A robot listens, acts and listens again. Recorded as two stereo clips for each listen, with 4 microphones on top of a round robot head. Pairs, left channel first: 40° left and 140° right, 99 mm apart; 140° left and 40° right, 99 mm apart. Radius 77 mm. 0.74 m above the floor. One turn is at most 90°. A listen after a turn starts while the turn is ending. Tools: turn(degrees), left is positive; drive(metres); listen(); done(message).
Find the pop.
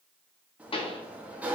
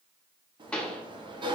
turn(degrees=60)
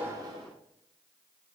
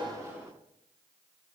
done("Facing where the pop came from. I can't hear it now.")